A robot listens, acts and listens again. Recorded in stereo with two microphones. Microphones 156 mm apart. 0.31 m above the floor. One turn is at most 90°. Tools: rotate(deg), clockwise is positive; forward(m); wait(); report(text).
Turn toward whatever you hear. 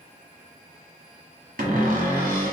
rotate(65)
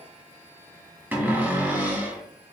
rotate(15)
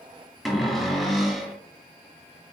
report("Facing the cupboard door.")